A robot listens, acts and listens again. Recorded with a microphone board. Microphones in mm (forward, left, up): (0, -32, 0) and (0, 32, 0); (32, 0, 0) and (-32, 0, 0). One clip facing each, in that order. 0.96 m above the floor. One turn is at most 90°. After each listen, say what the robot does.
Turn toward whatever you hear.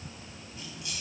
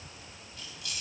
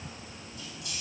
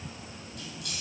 Turn 90° right.
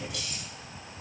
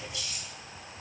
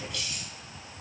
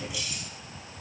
Turn 90° right.
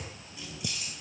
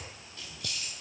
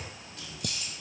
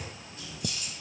Turn 20° right.
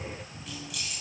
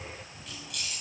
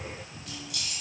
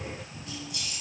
Facing the keys jangling.